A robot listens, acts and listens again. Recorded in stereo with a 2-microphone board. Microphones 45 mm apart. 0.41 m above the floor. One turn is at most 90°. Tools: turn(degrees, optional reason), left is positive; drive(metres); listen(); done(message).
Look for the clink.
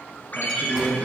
listen()
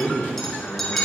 turn(degrees=30)
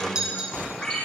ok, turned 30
turn(degrees=-20, reason="So it is at 20° right.")
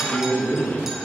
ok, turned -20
listen()
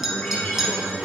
turn(degrees=-10, reason="The clink is now 10° right.")
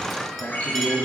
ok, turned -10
listen()
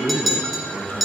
done("Found it: a clink, straight ahead.")